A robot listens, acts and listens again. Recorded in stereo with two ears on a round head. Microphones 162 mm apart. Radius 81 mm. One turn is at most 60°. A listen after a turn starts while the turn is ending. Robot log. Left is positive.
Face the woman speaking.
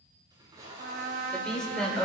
cmd yaw +30
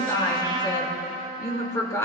note: So it is at 165° left.
cmd yaw +60
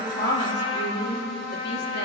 note: The woman speaking is now 115° left.
cmd yaw +60
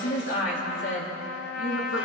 note: The woman speaking is now 75° left.
cmd yaw +60
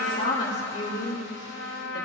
note: The woman speaking is now 60° left.
cmd yaw +60
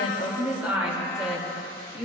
note: The woman speaking is now 10° right.
cmd yaw -10
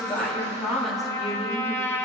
end: Found it: a woman speaking, straight ahead.